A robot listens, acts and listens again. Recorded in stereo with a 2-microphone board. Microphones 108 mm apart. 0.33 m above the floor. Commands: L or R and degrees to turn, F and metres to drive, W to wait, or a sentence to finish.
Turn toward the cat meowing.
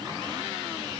W
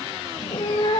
L50
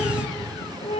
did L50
L70
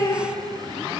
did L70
L35
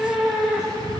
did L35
R10
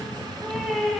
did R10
Found it: a cat meowing, straight ahead.